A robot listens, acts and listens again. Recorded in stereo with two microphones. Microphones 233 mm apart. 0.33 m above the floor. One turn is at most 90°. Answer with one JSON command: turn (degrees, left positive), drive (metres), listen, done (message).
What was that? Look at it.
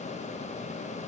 {"listen": true}
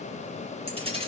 {"turn": -25}
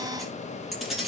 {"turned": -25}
{"done": "Facing the keys jangling, over 4 m away."}